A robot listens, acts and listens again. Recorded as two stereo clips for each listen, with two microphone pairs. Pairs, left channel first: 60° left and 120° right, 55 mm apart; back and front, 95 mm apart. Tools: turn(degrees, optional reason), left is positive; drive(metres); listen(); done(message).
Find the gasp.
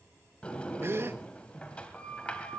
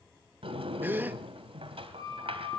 turn(degrees=-75, reason="The gasp: 75° right.")
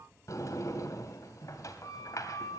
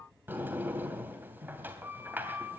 done("Facing where the gasp came from. I can't hear it now.")